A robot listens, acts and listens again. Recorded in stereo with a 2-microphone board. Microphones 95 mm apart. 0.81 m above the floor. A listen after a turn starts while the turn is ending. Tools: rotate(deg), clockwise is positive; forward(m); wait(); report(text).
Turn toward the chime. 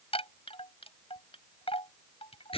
rotate(-75)
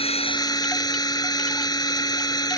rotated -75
wait()
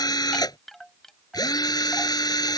report("Facing the chime.")